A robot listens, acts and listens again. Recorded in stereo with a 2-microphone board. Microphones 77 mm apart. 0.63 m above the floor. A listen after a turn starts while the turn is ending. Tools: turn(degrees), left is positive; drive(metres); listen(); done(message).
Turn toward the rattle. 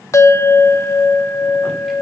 listen()
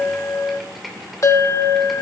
listen()
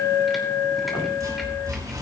turn(degrees=-50)
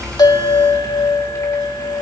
listen()
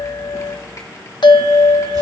listen()
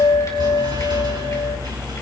turn(degrees=-80)
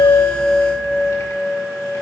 listen()
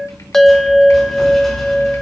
done("Found it: a rattle, straight ahead, over 4 m away.")